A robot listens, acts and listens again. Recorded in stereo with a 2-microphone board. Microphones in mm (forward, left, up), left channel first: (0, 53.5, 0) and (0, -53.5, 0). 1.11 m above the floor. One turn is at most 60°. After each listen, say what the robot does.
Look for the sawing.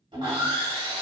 Turn 45° right.
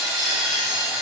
Facing the sawing, 1 to 2 m away.